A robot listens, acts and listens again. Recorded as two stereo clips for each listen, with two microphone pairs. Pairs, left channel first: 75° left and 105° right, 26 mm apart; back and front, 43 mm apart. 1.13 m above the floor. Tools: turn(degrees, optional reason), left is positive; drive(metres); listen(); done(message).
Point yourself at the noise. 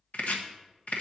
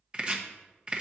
turn(degrees=65, reason="The chopping: 65° left.")
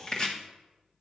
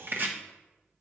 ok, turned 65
turn(degrees=25, reason="The chopping is now 25° left.")
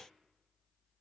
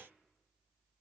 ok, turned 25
listen()
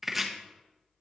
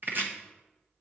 turn(degrees=-25, reason="The chopping is now 25° right.")
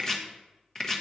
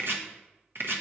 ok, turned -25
done("Found it: chopping, straight ahead, 1 to 2 m away.")